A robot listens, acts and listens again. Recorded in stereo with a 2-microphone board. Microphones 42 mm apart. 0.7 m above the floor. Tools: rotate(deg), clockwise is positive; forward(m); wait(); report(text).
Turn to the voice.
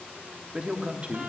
rotate(30)
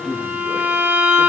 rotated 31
report("Facing the man speaking.")